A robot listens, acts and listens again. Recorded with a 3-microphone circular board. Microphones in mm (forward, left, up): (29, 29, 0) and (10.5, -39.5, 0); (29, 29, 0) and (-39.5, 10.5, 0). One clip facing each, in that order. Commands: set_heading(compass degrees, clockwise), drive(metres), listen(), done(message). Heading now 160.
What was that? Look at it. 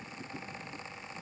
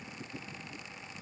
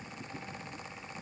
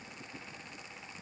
listen()
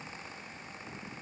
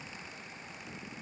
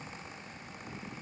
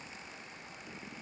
listen()
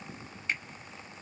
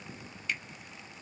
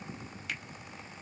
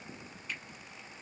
set_heading(145)
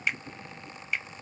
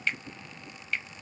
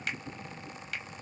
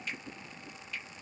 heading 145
done("Facing the finger snap, 1 to 2 m away.")